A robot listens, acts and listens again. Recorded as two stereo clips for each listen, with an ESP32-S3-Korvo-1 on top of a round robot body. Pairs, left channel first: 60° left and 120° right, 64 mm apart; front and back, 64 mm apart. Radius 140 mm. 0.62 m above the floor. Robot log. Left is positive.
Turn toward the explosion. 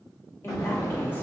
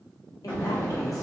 note: The explosion: 75° left.
cmd yaw +75
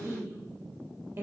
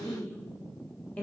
end: I heard an explosion from this way, but can't make it out now.